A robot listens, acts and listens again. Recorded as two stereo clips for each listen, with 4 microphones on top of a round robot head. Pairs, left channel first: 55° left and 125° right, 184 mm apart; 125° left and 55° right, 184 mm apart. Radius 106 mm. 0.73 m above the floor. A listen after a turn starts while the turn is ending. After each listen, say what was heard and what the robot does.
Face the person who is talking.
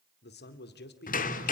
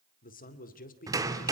The man speaking: 80° left. Turn 80° left.
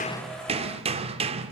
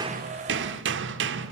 Keep listening.
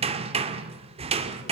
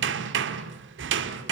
Keep listening.
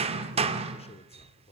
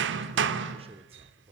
Facing the man speaking.